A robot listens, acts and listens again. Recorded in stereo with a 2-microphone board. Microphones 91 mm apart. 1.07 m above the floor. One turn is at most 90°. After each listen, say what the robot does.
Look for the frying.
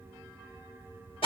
Keep listening.
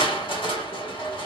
Keep listening.
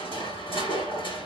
I can't make out frying, only crushing.